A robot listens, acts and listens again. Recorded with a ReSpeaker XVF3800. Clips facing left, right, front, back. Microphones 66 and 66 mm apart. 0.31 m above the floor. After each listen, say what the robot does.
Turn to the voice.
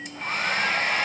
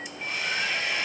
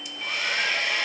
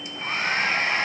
Keep listening.
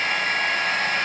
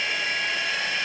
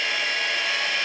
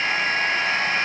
Keep listening.
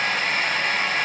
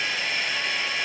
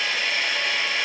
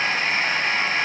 I can't make out anyone speaking to turn to.